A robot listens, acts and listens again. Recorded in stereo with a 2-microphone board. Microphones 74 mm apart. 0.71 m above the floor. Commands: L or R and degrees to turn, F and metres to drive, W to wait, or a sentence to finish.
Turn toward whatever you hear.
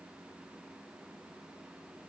W
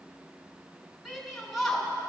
L30
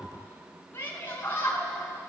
L150
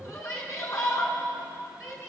L45
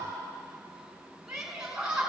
R10
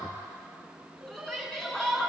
Found it: a shout, straight ahead, over 4 m away.